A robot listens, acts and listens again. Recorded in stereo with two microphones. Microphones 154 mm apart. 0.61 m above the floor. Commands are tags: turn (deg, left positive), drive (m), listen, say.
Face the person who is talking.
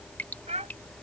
<turn deg="-50"/>
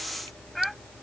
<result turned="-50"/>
<say>Found it: a child speaking, straight ahead.</say>